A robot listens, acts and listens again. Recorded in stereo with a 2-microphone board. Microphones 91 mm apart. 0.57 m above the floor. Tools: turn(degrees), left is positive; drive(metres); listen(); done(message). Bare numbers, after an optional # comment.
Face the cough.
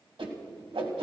listen()
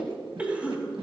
turn(-30)
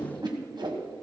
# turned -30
listen()
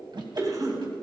# So it is at 135° right.
turn(-135)
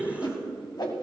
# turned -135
# The cough is now 20° right.
turn(-20)
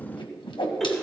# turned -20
listen()
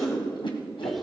done("Found it: a cough, straight ahead, 2 to 4 m away.")